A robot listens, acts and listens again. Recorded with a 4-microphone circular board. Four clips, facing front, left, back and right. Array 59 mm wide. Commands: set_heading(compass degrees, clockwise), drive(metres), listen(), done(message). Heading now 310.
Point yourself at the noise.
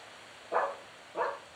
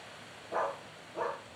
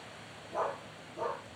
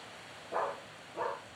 done("Found it: a dog barking, straight ahead.")